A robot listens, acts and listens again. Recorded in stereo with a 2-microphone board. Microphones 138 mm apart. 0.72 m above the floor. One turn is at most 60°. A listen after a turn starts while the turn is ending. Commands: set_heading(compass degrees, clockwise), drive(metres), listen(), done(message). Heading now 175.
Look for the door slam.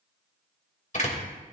set_heading(120)
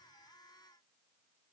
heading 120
listen()
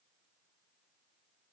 done("I heard a door slam, but can't make it out now. It was about straight ahead or 70° left.")